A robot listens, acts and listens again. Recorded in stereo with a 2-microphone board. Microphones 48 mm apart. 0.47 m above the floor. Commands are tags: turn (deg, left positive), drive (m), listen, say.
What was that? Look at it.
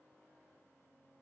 <listen/>
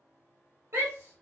<turn deg="-60"/>
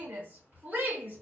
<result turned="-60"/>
<turn deg="-45"/>
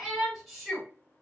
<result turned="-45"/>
<say>Facing the shout, 2 to 4 m away.</say>